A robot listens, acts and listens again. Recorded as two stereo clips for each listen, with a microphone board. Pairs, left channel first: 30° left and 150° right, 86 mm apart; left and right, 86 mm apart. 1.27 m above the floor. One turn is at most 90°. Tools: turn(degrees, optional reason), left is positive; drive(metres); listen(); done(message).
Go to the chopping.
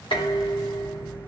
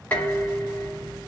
listen()
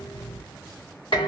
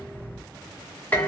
listen()
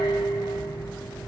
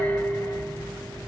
done("I can't make out chopping to turn to.")